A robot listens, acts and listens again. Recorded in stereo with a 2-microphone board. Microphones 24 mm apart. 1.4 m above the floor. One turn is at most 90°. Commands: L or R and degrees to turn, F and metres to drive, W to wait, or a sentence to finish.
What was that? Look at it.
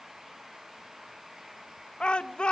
L55
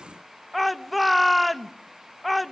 Facing the shout, 1 to 2 m away.